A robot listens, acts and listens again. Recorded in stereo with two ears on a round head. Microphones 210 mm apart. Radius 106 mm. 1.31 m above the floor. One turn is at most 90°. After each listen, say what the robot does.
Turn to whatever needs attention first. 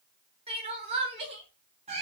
Turn 25° right.
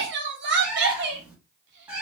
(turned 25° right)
Turn 90° right.
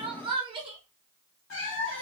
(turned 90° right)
Turn 20° right.
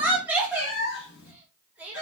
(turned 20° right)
Found it: crying, straight ahead, 1 to 2 m away.